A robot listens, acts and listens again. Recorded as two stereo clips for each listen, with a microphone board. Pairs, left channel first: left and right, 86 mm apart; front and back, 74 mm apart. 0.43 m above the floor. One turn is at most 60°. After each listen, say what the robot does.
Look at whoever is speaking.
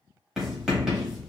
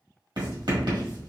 Keep listening.
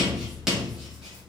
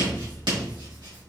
Keep listening.
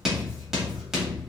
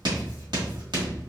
I can't make out anyone speaking, only writing.